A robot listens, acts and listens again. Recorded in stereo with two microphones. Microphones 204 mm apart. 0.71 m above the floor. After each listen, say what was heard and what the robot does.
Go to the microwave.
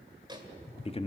The microwave: about 20° right or 160° right. Turn 20° right.
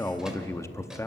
Keep listening.
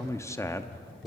Keep listening.
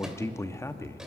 I heard a microwave, but can't make it out now. It was about straight ahead or 140° right. I did not reach it.